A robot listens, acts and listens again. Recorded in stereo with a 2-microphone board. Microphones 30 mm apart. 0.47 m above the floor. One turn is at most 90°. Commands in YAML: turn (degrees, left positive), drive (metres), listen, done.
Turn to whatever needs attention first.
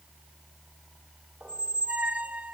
listen: true
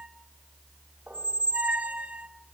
listen: true
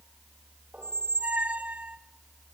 done: "I can't make out anything urgent, only a squeak."